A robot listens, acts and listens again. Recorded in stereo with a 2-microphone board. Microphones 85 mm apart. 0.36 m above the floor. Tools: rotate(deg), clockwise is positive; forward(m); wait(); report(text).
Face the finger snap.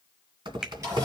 rotate(30)
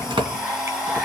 wait()
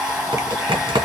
wait()
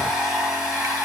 report("I heard a finger snap, but can't make it out now. It was about 20° left or 140° right.")